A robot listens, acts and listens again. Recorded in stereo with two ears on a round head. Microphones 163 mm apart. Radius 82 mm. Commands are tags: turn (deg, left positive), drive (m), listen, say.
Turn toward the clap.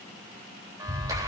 <turn deg="-20"/>
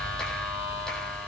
<say>Facing the clap, 2 to 4 m away.</say>